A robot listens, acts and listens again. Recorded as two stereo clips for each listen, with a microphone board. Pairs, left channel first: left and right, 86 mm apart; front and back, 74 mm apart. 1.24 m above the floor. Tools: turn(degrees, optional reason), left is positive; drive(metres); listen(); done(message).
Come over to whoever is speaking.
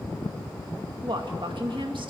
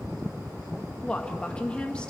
turn(degrees=-75, reason="The woman speaking: 75° right.")
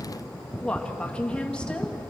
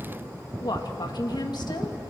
turn(degrees=10, reason="The woman speaking is now 10° left.")
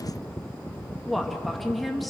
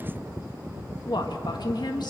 drive(metres=1.0)
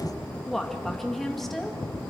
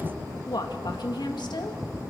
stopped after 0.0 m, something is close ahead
done("Blocked. The woman speaking is further on, straight ahead.")